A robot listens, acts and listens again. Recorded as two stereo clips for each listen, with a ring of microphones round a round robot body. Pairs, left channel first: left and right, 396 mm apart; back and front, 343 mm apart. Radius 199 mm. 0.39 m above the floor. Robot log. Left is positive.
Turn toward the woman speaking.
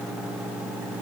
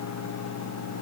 cmd idle
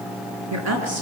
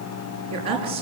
note: The woman speaking: 35° right.
cmd yaw -35
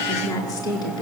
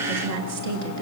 note: The woman speaking is now 10° left.
cmd yaw +10
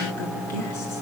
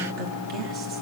cmd idle
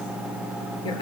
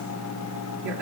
cmd idle
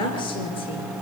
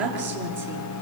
note: The woman speaking is now 10° left.
cmd yaw +10
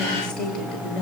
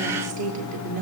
end: Found it: a woman speaking, straight ahead.